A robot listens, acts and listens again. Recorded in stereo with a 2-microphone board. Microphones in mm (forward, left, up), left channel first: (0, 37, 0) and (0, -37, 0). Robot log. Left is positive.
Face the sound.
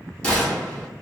cmd yaw +30
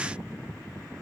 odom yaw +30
cmd idle
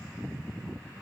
end: I heard a gunshot, but can't make it out now. It was about 15° right or 135° left.